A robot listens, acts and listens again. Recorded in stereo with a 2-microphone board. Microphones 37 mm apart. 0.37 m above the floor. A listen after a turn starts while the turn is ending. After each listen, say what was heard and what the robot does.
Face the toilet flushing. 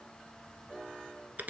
Keep listening.
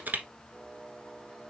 Keep listening.
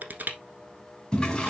The toilet flushing: about 20° left or 160° left. Turn 20° left.
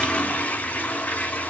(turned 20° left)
So it is at 135° left. Turn 135° left.
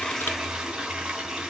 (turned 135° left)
The toilet flushing is now 20° right. Turn 20° right.
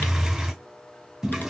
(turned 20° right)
The toilet flushing is now 10° right. Turn 10° right.
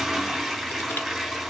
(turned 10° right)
Facing the toilet flushing.